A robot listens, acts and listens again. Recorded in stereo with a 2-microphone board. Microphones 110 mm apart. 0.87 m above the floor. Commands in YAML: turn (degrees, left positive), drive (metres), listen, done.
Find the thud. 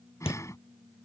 turn: 60
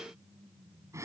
listen: true
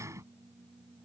done: "I heard a thud, but can't make it out now. It was about straight ahead or 60° left."